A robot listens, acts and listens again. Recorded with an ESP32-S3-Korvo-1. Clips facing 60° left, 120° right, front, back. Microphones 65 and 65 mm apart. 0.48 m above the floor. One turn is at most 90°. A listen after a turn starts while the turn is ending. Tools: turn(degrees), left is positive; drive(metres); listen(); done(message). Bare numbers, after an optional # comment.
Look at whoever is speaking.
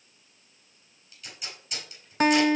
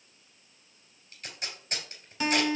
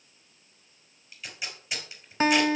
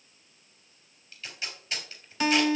listen()
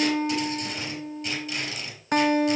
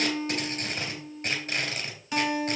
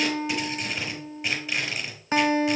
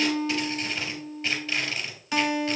listen()
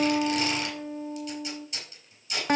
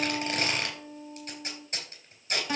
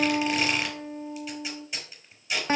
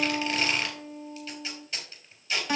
done("I can't make out anyone speaking to turn to.")